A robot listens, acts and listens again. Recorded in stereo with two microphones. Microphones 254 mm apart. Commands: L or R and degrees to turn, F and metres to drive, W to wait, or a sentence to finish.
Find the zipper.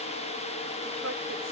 W
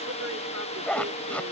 L30
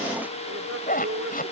L145
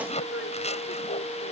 L25
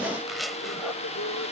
Facing the zipper.